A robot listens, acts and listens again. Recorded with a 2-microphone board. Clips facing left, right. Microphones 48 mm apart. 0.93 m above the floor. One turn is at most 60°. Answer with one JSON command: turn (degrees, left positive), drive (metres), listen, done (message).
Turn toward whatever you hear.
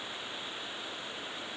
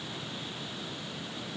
{"listen": true}
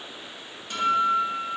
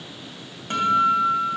{"turn": -40}
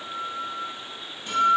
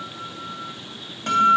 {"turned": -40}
{"turn": -60}
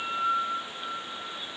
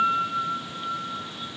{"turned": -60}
{"turn": -55}
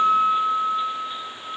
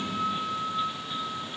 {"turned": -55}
{"turn": -10}
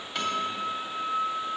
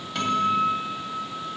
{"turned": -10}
{"done": "Found it: a guitar, straight ahead, 2 to 4 m away."}